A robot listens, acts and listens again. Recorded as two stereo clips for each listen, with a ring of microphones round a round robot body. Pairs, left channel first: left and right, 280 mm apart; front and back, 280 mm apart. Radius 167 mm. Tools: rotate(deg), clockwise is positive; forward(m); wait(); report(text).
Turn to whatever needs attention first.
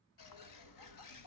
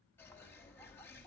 wait()
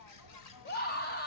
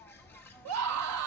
rotate(-150)
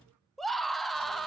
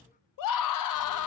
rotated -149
report("Found it: a scream, straight ahead, under 1 m away.")